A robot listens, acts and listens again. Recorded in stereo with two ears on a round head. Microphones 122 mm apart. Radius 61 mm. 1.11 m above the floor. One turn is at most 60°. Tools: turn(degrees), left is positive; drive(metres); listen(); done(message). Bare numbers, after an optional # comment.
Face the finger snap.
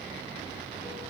listen()
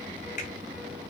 # The finger snap: about 60° left or 120° left.
turn(60)
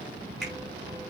done("Found it: a finger snap, straight ahead, 2 to 4 m away.")